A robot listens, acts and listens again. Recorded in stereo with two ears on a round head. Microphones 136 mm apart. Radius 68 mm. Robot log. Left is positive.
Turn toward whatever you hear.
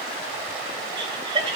note: The laughter: about 35° right or 145° right.
cmd yaw -35
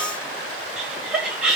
end: Found it: laughter, straight ahead.